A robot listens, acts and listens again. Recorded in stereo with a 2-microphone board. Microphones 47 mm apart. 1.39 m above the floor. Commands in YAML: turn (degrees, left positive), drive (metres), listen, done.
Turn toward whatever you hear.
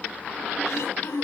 turn: 90
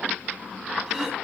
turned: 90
listen: true
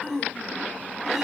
turn: -10
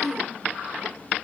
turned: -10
done: "Found it: throat clearing, straight ahead."